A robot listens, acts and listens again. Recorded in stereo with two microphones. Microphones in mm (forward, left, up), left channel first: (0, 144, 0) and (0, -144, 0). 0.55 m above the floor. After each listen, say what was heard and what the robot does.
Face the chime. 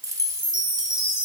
Turn 30° left.
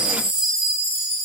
So it is at 135° left. Turn 135° left.
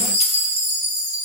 The chime is now 20° right. Turn 20° right.
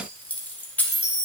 Found it: a chime, straight ahead.